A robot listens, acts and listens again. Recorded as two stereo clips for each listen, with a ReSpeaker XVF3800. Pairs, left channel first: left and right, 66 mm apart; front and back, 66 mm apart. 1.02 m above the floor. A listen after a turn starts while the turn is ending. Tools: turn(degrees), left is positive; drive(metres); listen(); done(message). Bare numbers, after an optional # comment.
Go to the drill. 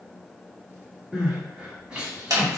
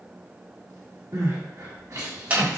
listen()
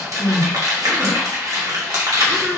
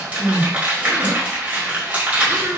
listen()
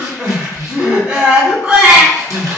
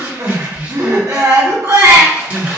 done("I can't make out a drill to turn to.")